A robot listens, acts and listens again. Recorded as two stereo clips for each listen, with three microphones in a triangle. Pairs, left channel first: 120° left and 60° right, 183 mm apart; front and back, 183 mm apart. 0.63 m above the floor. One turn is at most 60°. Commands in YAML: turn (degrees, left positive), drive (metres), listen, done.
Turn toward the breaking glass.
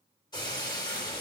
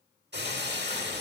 turn: -60
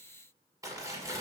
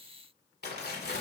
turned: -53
turn: -60
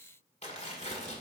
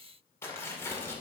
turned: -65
turn: -55
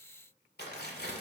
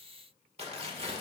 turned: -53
done: "I heard breaking glass from this way, but can't make it out now."